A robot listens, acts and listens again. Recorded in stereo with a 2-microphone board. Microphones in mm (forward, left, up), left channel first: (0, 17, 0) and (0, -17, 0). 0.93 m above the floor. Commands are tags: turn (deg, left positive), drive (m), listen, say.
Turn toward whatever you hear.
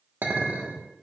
<turn deg="-90"/>
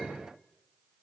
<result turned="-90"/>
<turn deg="10"/>
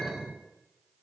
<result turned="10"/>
<say>Found it: a clink, straight ahead, 1 to 2 m away.</say>